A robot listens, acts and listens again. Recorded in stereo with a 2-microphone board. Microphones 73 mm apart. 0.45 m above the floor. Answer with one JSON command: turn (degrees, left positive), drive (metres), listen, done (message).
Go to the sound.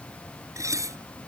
{"turn": -50}
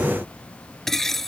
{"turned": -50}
{"drive": 1.0}
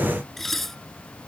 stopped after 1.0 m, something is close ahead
{"done": "Something is in my way. I am facing the dishes clattering but have not reached it."}